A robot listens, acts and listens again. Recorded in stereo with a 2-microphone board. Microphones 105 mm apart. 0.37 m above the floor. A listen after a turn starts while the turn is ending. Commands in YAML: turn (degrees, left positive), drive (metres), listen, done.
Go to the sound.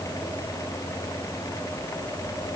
listen: true
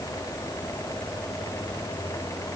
listen: true
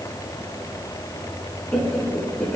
turn: 30
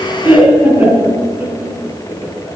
turn: -20
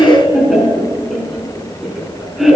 drive: 1.0
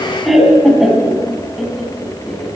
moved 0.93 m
drive: 1.0
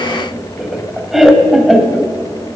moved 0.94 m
drive: 1.0
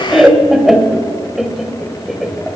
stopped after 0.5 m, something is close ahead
done: "Arrived at the laughter, straight ahead."